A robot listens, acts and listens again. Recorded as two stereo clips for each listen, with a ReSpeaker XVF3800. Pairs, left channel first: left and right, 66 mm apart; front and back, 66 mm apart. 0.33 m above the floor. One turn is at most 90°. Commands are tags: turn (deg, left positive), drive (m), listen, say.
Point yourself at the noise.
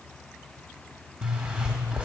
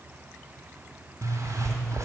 <turn deg="-90"/>
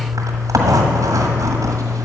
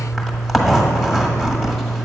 <turn deg="-85"/>
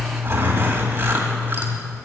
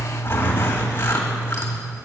<turn deg="-35"/>
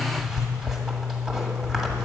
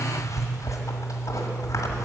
<say>Found it: a zipper, straight ahead, 1 to 2 m away.</say>